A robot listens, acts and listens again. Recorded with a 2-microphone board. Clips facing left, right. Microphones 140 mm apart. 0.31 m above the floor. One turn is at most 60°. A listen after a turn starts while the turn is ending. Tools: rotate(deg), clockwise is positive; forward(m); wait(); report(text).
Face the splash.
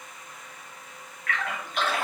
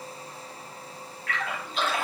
rotate(-60)
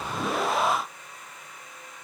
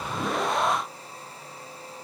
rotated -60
wait()
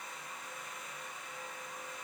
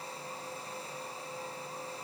report("I heard a splash, but can't make it out now. It was about straight ahead or 60° left.")